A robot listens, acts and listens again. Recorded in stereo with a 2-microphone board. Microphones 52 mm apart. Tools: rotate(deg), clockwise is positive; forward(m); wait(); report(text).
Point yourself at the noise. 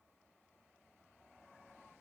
wait()
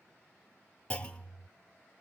rotate(-20)
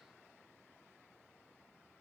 wait()
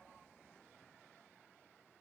report("I heard a clunk, but can't make it out now. It was about straight ahead or 140° left.")